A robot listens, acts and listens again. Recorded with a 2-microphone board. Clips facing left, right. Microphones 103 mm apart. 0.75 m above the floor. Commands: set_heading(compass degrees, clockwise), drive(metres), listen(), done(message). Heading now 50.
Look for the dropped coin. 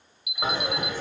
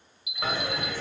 set_heading(35)
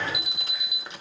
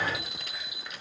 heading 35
done("Facing the dropped coin, 1 to 2 m away.")